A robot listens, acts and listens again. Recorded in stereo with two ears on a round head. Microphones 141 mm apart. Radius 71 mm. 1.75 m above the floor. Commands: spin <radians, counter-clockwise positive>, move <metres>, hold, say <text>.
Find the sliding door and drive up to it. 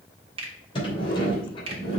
spin 0.61
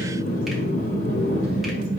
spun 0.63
spin 1.92
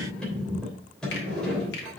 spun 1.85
move 1.0
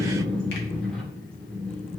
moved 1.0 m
move 1.0
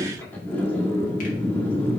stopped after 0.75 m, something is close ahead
spin 0.26
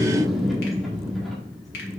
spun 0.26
say Arrived at the sliding door, straight ahead.